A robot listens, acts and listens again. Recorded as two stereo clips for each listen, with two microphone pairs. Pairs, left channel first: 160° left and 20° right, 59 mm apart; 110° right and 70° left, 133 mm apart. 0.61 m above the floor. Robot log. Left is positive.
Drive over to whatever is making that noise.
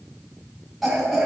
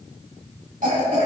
note: The cough: 65° left.
cmd yaw +65
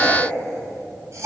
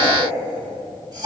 note: The cough is now 10° left.
cmd yaw +10
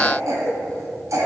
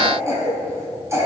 cmd fwd 1.0
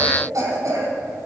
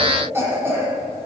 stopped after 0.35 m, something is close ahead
end: Something is in my way. I am facing the cough but have not reached it.